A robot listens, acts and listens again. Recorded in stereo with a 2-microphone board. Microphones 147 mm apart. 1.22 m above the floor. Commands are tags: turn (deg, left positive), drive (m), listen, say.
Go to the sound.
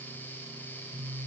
<listen/>
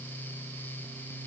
<listen/>
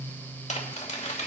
<turn deg="55"/>
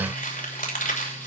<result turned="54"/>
<turn deg="70"/>
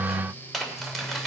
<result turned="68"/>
<drive m="1.0"/>
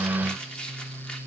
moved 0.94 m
<drive m="1.0"/>
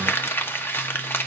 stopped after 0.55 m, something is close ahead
<turn deg="15"/>
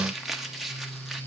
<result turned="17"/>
<say>Arrived at the crumpling, straight ahead.</say>